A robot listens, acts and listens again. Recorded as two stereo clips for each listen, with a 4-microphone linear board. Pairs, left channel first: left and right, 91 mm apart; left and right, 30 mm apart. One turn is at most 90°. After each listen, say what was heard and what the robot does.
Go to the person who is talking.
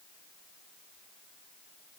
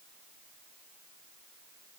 Keep listening.
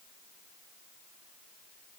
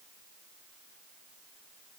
Keep listening.
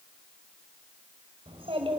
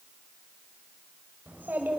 Turn 90° right.
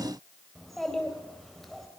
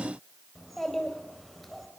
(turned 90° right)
Drive 1.0 m forward.
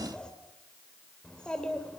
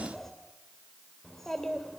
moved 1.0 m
The child speaking is now 10° left. Turn 10° left.
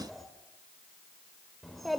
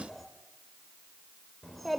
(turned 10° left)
Drive 1.0 m forward.
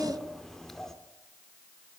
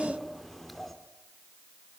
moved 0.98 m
Drive 1.0 m forward.
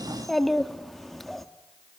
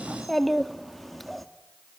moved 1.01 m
Drive 1.0 m forward.
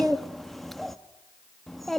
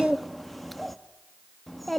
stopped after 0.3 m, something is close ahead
I am next to the child speaking.